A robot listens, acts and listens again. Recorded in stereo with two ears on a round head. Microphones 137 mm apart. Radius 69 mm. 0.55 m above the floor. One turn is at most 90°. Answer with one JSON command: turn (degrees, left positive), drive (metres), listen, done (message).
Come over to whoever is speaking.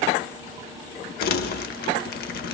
{"listen": true}
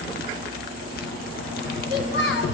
{"turn": 75}
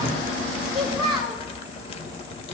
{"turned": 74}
{"drive": 1.0}
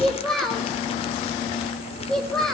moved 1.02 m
{"drive": 1.0}
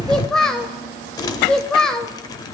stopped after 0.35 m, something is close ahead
{"done": "Arrived at the child speaking, straight ahead."}